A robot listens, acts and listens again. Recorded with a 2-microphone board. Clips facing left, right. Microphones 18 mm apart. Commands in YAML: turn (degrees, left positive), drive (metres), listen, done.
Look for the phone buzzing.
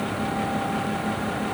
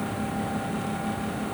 listen: true
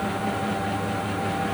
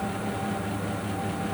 listen: true
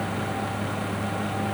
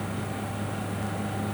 done: "I can't make out a phone buzzing to turn to."